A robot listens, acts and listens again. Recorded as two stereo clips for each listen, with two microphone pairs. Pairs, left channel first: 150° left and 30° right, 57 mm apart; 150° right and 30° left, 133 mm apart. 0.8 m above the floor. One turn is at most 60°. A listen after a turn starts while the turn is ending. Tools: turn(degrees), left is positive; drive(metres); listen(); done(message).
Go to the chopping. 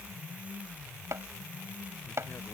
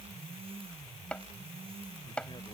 turn(degrees=-60)
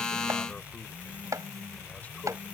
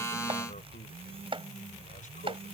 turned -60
turn(degrees=-15)
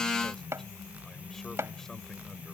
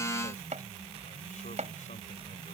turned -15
drive(metres=1.0)
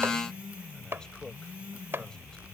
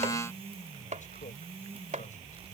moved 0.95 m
turn(degrees=15)
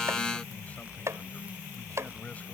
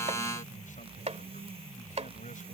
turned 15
drive(metres=1.0)
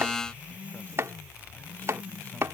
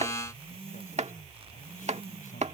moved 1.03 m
drive(metres=1.0)
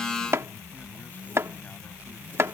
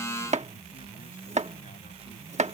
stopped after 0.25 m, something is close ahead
done("I am next to the chopping.")